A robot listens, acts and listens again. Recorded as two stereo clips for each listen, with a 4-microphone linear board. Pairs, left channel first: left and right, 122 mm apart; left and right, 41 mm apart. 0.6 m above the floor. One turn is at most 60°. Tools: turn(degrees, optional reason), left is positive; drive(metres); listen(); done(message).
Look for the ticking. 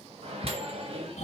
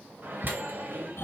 turn(degrees=35, reason="The ticking: about 35° left or 145° left.")
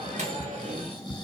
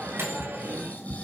done("Found it: ticking, straight ahead, 1 to 2 m away.")